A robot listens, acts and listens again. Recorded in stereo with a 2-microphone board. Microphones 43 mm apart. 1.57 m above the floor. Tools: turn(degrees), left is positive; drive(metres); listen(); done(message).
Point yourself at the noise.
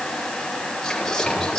turn(degrees=30)
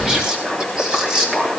turn(degrees=-15)
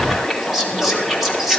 done("Facing the whispering, 2 to 4 m away.")